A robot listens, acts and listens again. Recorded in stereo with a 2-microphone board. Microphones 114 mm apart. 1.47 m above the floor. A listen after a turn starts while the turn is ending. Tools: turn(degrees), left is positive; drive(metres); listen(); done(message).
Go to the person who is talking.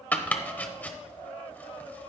listen()
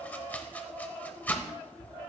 listen()
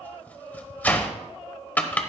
done("I can't make out anyone speaking, only chopping.")